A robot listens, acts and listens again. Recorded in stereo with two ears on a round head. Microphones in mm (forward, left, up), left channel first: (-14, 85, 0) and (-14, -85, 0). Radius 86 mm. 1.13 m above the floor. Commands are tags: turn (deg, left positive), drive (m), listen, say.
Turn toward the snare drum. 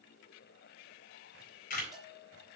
<listen/>
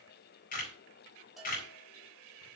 <listen/>
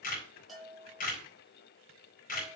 <say>I can't make out a snare drum, only a camera shutter and a bell.</say>